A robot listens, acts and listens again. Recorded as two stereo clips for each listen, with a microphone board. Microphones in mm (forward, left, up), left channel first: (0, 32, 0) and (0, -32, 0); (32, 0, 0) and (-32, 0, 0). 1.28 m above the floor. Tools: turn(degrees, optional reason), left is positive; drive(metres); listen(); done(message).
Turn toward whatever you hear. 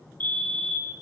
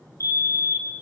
turn(degrees=30, reason="The fire alarm: 30° left.")
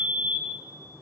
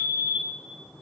done("Facing the fire alarm, 1 to 2 m away.")